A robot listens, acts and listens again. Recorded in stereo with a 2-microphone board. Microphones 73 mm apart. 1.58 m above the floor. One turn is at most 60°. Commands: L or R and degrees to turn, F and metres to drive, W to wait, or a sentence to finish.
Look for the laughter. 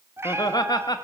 L60
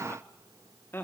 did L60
L35
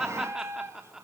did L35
Facing the laughter, 2 to 4 m away.